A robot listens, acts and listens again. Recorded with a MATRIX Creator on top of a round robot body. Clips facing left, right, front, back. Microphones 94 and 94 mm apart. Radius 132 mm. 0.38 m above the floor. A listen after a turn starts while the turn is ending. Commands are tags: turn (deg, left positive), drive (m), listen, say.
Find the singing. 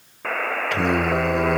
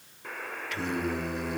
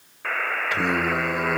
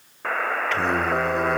<turn deg="80"/>
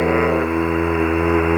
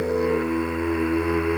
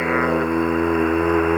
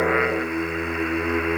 <turn deg="45"/>
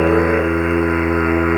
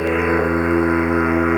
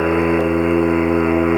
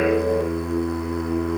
<turn deg="15"/>
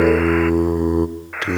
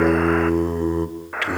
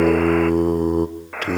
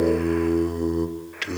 <turn deg="30"/>
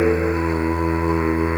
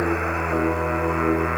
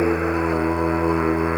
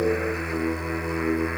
<turn deg="20"/>
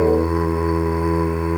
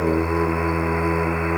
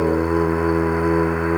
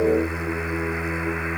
<say>Found it: singing, straight ahead, 1 to 2 m away.</say>